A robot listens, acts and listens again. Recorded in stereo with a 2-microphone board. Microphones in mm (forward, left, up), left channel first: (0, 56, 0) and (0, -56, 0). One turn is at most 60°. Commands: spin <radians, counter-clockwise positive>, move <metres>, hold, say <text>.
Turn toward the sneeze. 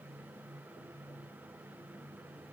hold
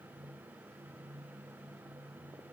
hold
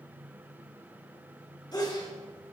spin 0.70
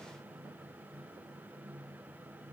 hold
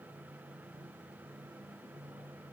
say I heard a sneeze, but can't make it out now. It was about straight ahead or 100° left.